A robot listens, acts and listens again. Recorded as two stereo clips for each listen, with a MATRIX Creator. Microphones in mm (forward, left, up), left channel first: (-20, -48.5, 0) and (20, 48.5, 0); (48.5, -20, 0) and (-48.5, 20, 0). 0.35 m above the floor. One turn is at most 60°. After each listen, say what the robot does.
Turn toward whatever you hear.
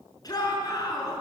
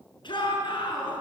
Turn 60° right.
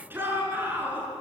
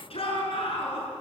Found it: a shout, straight ahead, over 4 m away.